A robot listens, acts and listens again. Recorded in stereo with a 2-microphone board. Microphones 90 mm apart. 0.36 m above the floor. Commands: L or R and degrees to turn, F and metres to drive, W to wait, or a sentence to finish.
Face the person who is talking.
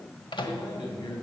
L55
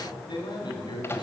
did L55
L60
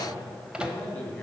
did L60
L20
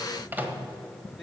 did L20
Facing the man speaking.